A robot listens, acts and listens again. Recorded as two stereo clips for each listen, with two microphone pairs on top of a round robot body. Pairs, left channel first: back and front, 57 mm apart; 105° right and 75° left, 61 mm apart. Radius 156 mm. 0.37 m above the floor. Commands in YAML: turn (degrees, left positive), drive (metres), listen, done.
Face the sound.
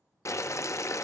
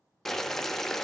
turn: 175
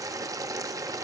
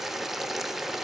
turn: -15
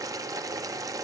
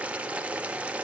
done: "Found it: boiling, straight ahead."